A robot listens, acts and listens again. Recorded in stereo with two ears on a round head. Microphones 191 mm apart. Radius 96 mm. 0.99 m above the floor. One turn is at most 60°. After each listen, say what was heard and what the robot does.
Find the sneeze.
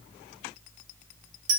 Keep listening.
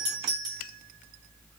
Keep listening.
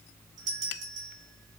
I can't make out a sneeze, only a doorbell.